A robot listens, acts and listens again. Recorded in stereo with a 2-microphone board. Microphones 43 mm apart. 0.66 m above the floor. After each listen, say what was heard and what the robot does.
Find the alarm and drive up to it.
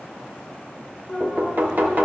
Turn 30° left.
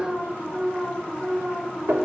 So it is at 15° right. Turn 15° right.
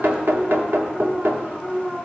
Drive 1.0 m forward.
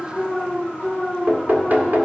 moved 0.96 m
The alarm is now 10° right. Turn 10° right.
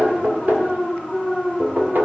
Drive 1.0 m forward.
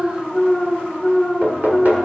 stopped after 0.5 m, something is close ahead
Arrived at the alarm, straight ahead.